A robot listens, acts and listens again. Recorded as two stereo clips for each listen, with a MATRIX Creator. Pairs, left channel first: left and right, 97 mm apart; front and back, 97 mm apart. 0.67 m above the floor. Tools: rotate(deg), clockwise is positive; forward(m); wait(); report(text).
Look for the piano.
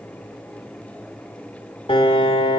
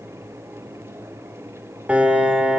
rotate(-105)
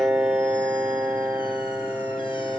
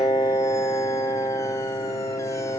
rotate(10)
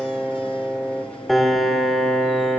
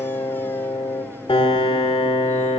report("Found it: a piano, straight ahead.")